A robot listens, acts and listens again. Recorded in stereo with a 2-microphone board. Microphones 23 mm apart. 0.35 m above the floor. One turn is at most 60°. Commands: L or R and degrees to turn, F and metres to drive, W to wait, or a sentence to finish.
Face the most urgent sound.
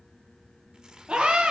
R40
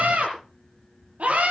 R60
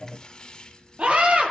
R60
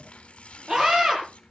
R35
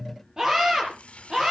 R25
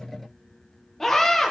L10
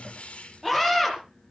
Facing the scream, over 4 m away.